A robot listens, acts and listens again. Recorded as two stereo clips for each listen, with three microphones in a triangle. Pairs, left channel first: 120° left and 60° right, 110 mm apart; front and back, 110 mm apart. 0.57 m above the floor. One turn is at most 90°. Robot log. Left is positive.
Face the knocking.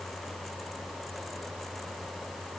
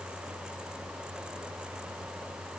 cmd idle
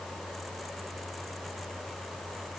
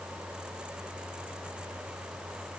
cmd idle
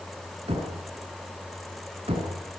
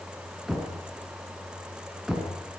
note: The knocking: 95° right.
cmd yaw -90
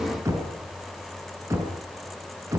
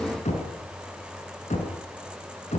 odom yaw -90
end: Found it: knocking, straight ahead.